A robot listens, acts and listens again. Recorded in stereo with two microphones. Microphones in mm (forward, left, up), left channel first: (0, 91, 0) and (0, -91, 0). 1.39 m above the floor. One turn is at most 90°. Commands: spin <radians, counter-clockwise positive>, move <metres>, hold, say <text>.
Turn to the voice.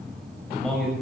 spin 0.52
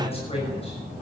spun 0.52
spin 1.57
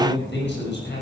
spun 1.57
spin 1.40
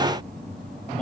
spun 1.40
hold
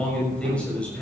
say Facing the man speaking, over 4 m away.